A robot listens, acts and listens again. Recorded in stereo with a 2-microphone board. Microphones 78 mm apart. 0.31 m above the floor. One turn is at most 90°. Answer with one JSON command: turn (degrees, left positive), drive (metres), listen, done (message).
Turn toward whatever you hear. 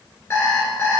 {"turn": 35}
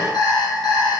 {"turn": 90}
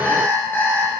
{"turn": 25}
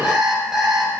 {"done": "Found it: an alarm clock, straight ahead, 2 to 4 m away."}